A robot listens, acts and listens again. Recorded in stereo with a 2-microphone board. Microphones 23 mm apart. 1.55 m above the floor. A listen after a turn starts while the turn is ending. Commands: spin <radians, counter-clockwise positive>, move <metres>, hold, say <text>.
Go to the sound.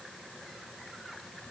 hold
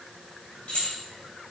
spin 1.57
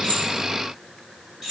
move 1.0
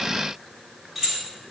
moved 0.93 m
spin -0.17
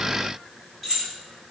move 1.0
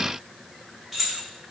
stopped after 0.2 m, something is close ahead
say I am next to the keys jangling.